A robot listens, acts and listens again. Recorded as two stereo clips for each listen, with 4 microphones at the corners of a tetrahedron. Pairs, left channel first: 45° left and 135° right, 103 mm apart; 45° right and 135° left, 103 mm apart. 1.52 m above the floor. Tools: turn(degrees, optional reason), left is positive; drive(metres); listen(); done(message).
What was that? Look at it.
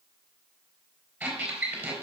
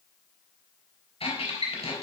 turn(degrees=-65, reason="The squeak: 65° right.")
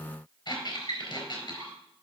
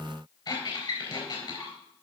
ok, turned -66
done("Found it: a squeak, straight ahead.")